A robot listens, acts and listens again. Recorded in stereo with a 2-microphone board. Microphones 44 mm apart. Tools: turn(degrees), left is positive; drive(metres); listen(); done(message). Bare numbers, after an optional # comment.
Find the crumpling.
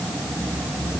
listen()
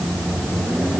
listen()
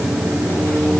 done("I can't make out crumpling, only a microwave.")